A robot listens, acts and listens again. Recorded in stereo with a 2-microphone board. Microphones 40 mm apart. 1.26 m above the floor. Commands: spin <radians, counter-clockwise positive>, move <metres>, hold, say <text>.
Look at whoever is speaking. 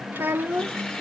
spin -1.13
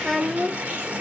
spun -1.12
spin -0.44
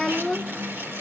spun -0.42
say Facing the child speaking.